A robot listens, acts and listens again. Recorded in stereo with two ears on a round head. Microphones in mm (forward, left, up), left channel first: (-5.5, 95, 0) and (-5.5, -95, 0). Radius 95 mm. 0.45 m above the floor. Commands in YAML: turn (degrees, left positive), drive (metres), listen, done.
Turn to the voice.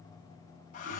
listen: true
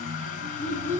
turn: 30
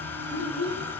turn: 135
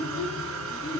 turn: 30
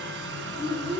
done: "Found it: a child speaking, straight ahead."